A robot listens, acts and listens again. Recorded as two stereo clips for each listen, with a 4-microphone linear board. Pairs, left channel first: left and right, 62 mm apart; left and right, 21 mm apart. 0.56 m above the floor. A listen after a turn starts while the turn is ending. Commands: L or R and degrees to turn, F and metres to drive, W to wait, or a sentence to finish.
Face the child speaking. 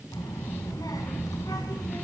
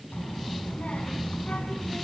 L90
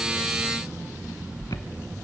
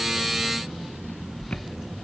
R20
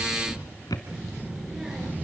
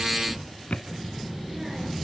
R10
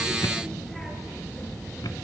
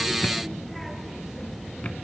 Found it: a child speaking, straight ahead.